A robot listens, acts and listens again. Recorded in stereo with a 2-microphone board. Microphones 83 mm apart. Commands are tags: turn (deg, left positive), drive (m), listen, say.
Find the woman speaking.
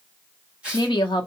<turn deg="70"/>
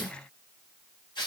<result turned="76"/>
<listen/>
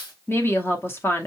<turn deg="30"/>
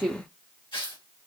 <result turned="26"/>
<say>Found it: a woman speaking, straight ahead, under 1 m away.</say>